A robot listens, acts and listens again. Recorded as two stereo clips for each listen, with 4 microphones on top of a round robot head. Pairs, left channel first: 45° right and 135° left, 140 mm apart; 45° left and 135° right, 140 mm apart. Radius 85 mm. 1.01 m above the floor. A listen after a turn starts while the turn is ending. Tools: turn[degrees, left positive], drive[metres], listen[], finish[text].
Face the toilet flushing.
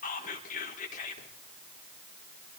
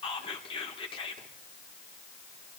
Action: listen[]
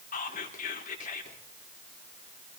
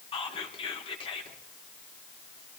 Action: listen[]
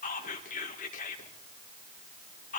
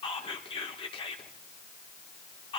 Action: finish[I can't make out a toilet flushing to turn to.]